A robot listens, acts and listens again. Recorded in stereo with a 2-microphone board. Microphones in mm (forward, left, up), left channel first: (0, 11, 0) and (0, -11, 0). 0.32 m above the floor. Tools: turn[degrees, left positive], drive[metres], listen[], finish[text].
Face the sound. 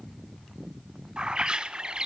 Thought: The bird: about 40° right or 140° right.
Action: turn[-40]
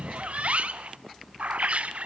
Thought: So it is at 95° right.
Action: turn[-95]
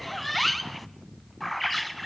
Action: finish[Facing the bird, under 1 m away.]